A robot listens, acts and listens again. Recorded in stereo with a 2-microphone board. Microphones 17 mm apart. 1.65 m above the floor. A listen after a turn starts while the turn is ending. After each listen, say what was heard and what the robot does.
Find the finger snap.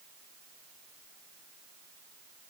Keep listening.
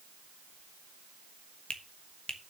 The finger snap: about 60° left or 120° left. Turn 60° left.
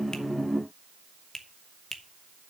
So it is at 25° left. Turn 25° left.
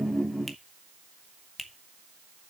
Facing the finger snap, 1 to 2 m away.